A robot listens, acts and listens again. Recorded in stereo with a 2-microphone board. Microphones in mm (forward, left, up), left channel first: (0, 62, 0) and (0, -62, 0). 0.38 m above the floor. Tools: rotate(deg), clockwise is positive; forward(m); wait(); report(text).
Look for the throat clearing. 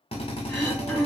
rotate(-30)
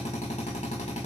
wait()
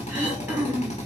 rotate(15)
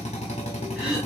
report("Found it: throat clearing, straight ahead.")